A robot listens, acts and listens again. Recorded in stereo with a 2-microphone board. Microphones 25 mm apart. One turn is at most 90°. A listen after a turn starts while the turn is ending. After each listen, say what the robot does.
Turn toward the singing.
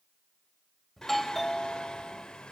Turn 30° left.
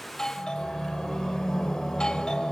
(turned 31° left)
Turn 10° left.
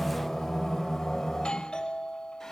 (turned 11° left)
Found it: singing, straight ahead.